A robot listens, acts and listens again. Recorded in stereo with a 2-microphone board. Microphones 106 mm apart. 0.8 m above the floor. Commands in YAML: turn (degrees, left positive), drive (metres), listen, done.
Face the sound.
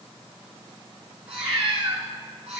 turn: -90
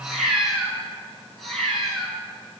done: "Facing the cat meowing, over 4 m away."